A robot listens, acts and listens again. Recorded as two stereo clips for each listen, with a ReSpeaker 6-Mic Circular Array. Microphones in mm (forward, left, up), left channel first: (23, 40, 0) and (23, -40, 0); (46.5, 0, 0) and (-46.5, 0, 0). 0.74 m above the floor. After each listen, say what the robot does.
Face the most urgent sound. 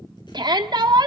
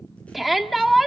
Turn 90° right.
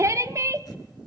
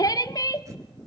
Turn 45° right.
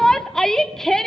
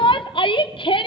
Facing the shout.